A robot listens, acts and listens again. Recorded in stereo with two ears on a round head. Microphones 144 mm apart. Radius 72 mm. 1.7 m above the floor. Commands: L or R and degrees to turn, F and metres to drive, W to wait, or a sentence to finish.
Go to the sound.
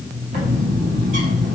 R50
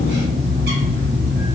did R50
R75
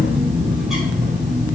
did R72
F1.0
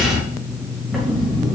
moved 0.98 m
F1.0
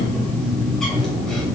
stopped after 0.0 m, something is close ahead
Arrived at the bird, straight ahead.